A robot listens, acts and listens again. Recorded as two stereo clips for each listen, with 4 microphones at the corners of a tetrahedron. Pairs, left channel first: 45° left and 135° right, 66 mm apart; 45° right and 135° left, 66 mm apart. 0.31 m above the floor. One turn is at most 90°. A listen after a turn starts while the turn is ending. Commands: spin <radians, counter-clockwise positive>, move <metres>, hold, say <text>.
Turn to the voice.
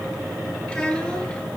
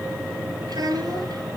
spin 1.57
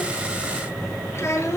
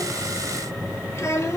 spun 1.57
say Facing the child speaking.